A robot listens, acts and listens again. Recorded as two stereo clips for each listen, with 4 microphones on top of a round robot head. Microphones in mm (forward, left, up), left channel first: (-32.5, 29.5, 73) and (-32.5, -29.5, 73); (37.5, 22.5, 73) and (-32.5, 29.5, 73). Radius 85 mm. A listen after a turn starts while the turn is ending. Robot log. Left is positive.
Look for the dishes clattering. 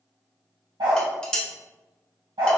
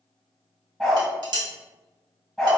note: The dishes clattering: 165° left.
cmd yaw +165
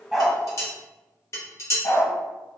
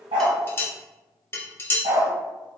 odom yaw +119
note: The dishes clattering is now 50° left.
cmd yaw +50
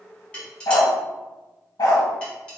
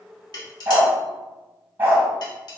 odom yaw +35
note: Nothing new. It was at 15° left.
cmd yaw +15
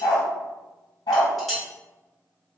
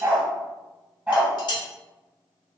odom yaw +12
end: Found it: dishes clattering, straight ahead.